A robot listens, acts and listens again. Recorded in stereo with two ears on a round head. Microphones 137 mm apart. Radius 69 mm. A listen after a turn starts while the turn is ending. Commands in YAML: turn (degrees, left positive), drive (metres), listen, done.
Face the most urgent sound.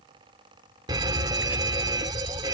turn: -25
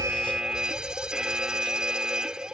done: "Found it: a fire alarm, straight ahead."